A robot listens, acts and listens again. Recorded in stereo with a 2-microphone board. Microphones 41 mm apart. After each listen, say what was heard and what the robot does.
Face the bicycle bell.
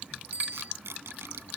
The bicycle bell: about 40° right or 140° right. Turn 40° right.
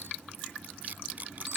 Keep listening.
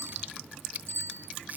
So it is at 95° right. Turn 95° right.
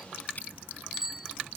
The bicycle bell is now 10° right. Turn 10° right.
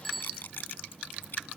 Facing the bicycle bell.